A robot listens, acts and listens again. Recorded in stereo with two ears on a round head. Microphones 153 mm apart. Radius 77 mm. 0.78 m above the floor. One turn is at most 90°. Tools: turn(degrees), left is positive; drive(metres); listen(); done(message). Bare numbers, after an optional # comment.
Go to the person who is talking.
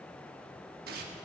listen()
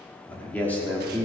turn(30)
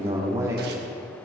# So it is at 20° right.
turn(-20)
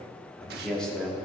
drive(1.0)
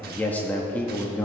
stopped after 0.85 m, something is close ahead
# The man speaking is now 15° left.
turn(15)
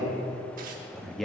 done("I am next to the man speaking.")